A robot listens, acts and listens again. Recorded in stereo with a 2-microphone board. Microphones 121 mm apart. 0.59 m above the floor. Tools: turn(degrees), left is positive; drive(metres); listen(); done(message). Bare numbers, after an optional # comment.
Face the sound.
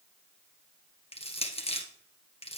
# The crushing: about 55° left or 125° left.
turn(55)
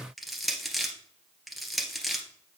done("Facing the crushing.")